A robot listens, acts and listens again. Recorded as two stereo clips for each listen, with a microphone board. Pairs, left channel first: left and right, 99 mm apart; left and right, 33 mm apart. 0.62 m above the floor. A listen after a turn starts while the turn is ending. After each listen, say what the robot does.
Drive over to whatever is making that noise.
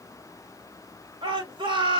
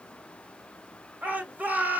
Turn 55° right.
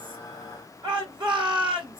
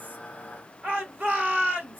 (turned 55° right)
Turn 65° right.
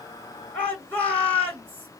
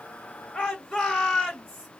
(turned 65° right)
Turn 15° left.
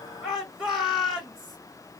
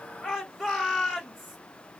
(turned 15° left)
Drive 1.0 m forward.
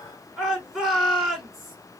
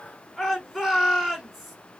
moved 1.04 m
Drive 1.0 m forward.
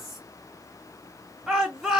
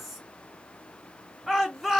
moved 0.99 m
Drive 1.0 m forward.
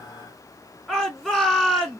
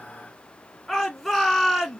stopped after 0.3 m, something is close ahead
Arrived at the shout, straight ahead.